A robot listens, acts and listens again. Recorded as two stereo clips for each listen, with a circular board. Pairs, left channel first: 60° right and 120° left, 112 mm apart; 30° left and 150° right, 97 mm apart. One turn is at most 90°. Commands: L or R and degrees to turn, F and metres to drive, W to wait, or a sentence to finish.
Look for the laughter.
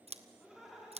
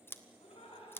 L30
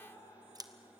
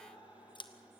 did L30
Found it: laughter, straight ahead.